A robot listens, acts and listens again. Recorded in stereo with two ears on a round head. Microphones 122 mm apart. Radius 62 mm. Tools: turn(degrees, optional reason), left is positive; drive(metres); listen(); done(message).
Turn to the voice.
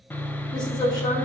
turn(degrees=30, reason="The woman speaking: about 30° left or 150° left.")
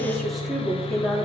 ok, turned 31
done("Facing the woman speaking, 2 to 4 m away.")